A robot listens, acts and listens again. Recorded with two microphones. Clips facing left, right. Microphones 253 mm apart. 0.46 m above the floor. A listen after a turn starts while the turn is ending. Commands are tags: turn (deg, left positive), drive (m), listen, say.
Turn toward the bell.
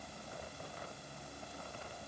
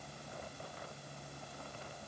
<listen/>
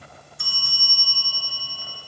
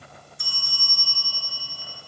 <turn deg="70"/>
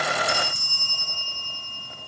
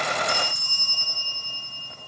<turn deg="35"/>
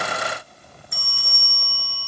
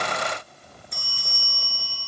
<say>Facing the bell.</say>